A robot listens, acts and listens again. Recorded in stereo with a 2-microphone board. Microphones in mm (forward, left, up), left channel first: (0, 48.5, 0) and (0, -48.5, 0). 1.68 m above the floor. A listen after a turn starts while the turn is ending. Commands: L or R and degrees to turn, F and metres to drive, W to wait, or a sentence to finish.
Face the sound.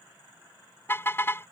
L25
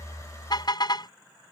L135
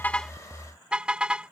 R10
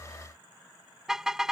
Facing the car horn.